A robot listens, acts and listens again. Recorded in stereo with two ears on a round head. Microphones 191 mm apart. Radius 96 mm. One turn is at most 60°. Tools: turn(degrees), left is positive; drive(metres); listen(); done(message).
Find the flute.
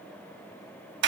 listen()
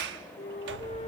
turn(degrees=25)
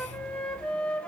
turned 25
done("Found it: a flute, straight ahead.")